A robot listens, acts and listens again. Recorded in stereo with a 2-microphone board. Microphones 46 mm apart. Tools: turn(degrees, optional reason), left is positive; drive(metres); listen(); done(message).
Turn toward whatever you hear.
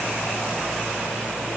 listen()
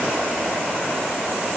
listen()
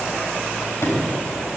turn(degrees=65, reason="The sliding door: about 65° left or 115° left.")
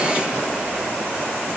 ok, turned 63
listen()
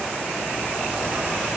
listen()
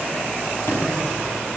done("I heard a sliding door, but can't make it out now. It was about 5° left or 50° left.")